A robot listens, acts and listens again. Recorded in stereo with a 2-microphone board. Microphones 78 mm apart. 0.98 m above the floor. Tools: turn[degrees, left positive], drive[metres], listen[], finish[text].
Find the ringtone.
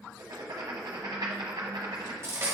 Action: listen[]
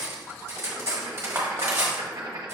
Action: listen[]
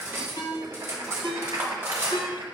Thought: The ringtone: about 75° left or 105° left.
Action: turn[75]
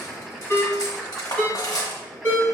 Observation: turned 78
Thought: So it is at 25° left.
Action: turn[25]
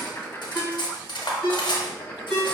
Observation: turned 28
Action: finish[Found it: a ringtone, straight ahead.]